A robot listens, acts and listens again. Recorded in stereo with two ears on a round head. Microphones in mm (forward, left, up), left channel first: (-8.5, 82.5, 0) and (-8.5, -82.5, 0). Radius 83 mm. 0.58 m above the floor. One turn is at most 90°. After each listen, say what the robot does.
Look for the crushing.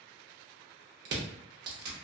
Turn 60° right.
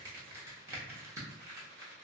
Turn 20° right.
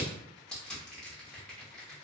Found it: crushing, straight ahead, under 1 m away.